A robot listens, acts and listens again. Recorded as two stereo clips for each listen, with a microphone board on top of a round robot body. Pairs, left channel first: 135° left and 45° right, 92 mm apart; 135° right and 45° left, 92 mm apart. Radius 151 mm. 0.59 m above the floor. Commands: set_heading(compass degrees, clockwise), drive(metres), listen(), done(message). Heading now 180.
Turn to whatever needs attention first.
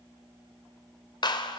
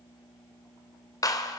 listen()
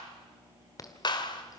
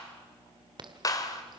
set_heading(95)
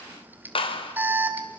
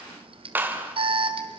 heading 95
set_heading(70)
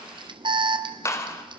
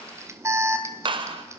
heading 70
set_heading(85)
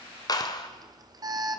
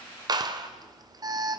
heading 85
done("Found it: an alarm, straight ahead.")